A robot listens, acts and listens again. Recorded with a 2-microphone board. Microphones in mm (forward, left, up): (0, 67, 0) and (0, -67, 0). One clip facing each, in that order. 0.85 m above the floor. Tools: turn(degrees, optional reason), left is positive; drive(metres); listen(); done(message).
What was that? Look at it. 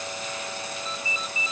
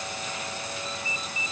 turn(degrees=-55, reason="The ringtone: about 55° right or 125° right.")
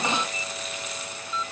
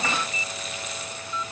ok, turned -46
turn(degrees=-10, reason="So it is at 10° right.")
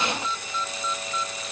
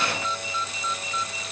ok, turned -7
done("Found it: a ringtone, straight ahead.")